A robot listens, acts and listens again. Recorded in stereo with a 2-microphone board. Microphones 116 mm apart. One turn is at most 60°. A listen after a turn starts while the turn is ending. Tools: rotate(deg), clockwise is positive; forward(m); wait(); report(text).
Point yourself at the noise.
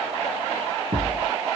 rotate(60)
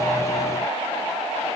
wait()
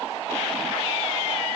report("I heard a thud, but can't make it out now. It was about 5° right or 55° right.")